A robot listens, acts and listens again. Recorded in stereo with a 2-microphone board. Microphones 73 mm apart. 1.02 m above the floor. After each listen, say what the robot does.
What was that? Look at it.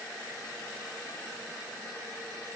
Keep listening.
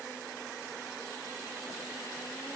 Keep listening.
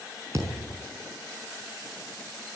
Turn 45° right.
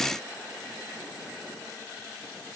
Keep listening.
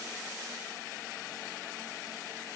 I heard a thud, but can't make it out now. It was about straight ahead or 90° right.